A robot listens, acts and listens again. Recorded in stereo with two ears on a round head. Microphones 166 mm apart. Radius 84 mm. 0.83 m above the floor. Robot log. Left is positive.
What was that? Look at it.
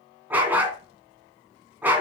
cmd yaw -30
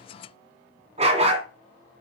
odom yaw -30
note: So it is at 140° right.
cmd yaw -140
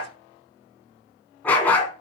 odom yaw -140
note: The dog barking is now 10° left.
cmd yaw +10
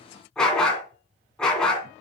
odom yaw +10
end: Found it: a dog barking, straight ahead.